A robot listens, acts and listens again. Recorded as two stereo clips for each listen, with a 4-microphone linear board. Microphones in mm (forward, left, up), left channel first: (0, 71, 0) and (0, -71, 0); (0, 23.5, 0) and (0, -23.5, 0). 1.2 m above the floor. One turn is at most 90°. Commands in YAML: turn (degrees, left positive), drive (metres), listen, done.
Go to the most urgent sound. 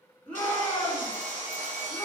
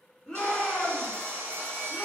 turn: 30
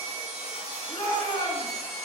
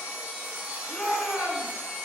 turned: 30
turn: 90
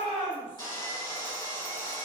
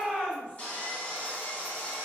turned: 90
turn: 60
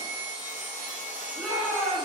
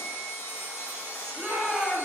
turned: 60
drive: 1.0
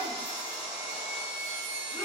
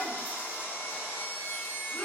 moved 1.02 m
listen: true
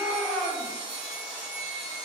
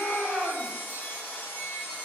turn: 10
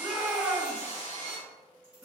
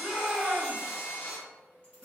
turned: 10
drive: 1.0
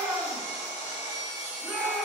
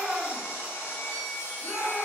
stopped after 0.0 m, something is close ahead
done: "I am next to the shout."